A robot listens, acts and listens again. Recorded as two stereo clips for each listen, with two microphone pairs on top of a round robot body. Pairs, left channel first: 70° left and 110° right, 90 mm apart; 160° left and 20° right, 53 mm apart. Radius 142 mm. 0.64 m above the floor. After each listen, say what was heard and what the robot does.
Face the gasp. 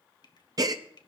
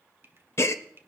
The gasp: 160° right. Turn 160° right.
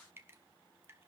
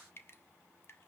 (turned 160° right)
I heard a gasp from this way, but can't make it out now.